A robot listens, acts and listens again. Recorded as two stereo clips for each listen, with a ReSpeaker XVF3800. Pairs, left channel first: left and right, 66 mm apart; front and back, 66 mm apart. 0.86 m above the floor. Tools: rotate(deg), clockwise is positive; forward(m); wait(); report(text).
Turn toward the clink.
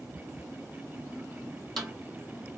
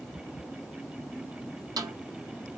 wait()
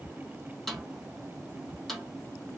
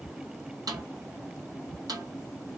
wait()
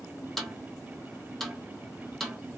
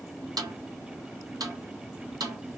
report("I can't make out a clink, only a snare drum.")